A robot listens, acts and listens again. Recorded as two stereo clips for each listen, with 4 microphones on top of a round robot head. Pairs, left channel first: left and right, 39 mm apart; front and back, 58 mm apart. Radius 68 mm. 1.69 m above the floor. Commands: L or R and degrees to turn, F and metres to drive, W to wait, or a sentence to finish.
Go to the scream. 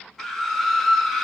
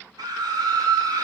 L170
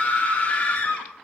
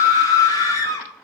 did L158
L15
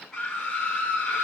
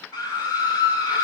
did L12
F1.0
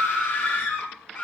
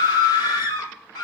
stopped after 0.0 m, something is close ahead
Blocked. The scream is further on, straight ahead.